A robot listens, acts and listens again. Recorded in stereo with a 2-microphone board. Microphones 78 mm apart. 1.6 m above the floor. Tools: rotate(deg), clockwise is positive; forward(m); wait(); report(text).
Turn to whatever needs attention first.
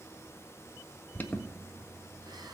rotate(-25)
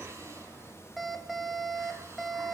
report("Found it: an alarm, straight ahead, 1 to 2 m away.")